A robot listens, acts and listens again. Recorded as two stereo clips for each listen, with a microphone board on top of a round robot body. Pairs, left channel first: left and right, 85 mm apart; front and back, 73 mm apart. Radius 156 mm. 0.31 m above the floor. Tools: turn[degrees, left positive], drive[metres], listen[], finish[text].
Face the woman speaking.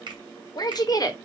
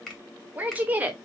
Thought: The woman speaking: 120° left.
Action: turn[120]
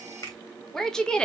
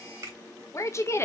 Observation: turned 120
Thought: The woman speaking is now 20° left.
Action: turn[20]
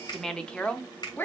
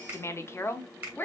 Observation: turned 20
Thought: The woman speaking is now 40° left.
Action: turn[40]
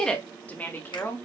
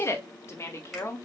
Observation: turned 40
Thought: The woman speaking is now 40° left.
Action: turn[40]
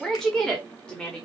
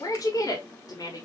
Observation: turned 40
Thought: The woman speaking is now 15° left.
Action: turn[15]
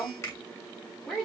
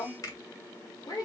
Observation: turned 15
Action: finish[Found it: a woman speaking, straight ahead, 1 to 2 m away.]